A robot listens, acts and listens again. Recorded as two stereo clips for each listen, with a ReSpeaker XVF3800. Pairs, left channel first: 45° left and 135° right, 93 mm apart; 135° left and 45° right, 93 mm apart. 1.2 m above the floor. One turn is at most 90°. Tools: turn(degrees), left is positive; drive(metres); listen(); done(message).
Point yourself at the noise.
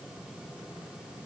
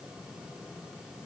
listen()
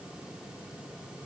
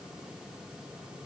listen()
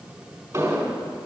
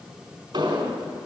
turn(degrees=-75)
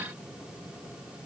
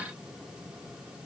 done("Facing where the explosion came from. I can't hear it now.")